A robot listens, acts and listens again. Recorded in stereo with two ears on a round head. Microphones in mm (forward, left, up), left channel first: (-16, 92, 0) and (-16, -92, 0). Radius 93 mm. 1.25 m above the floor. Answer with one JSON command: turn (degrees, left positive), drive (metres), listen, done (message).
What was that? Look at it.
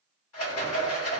{"turn": 90}
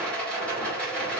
{"done": "Facing the rattle."}